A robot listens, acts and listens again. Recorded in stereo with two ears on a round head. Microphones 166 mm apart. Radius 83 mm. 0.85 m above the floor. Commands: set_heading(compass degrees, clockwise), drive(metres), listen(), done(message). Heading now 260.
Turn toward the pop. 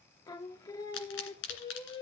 set_heading(190)
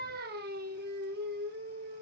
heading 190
listen()
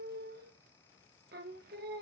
done("I heard a pop, but can't make it out now. It was about straight ahead or 40° left.")